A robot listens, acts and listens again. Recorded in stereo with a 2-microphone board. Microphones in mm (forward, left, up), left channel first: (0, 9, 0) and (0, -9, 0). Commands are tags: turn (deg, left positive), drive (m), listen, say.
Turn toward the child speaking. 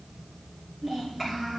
<turn deg="30"/>
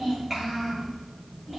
<say>Facing the child speaking.</say>